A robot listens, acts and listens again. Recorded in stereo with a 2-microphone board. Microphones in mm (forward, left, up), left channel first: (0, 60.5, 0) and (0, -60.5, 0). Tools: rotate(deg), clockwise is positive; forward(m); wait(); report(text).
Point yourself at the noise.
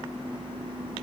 wait()
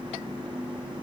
wait()
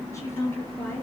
rotate(-25)
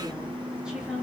rotate(10)
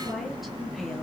wait()
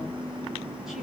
wait()
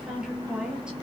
report("Facing the woman speaking.")